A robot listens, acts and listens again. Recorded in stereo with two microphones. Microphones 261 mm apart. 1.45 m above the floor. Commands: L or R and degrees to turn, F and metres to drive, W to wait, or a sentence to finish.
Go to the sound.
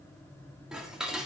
R30
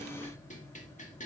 L30
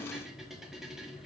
F1.0
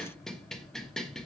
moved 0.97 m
F1.0
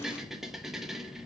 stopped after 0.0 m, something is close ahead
Arrived at the dishes clattering, straight ahead.